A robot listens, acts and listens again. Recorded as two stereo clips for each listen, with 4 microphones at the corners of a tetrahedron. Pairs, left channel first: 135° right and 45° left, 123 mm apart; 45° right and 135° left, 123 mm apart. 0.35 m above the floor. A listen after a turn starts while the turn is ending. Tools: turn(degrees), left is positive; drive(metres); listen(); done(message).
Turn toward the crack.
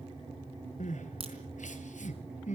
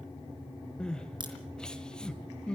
turn(degrees=85)
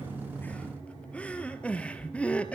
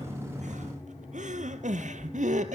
done("Facing where the crack came from. I can't hear it now.")